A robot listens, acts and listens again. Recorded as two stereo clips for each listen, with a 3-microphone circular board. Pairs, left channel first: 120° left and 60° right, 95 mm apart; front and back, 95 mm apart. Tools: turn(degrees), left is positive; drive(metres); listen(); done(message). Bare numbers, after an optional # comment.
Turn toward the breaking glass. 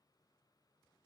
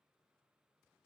listen()
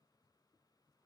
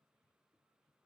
listen()
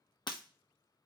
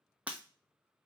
# The breaking glass: 110° left.
turn(110)
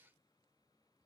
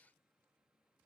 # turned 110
done("Facing where the breaking glass came from. I can't hear it now.")